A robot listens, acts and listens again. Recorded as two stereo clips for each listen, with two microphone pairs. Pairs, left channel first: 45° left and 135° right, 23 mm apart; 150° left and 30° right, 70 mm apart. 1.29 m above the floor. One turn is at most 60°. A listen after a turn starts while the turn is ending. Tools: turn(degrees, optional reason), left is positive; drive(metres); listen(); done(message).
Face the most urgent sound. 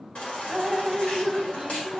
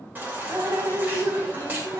turn(degrees=30, reason="The baby crying: 30° left.")
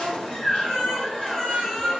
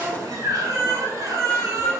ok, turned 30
done("Facing the baby crying, 1 to 2 m away.")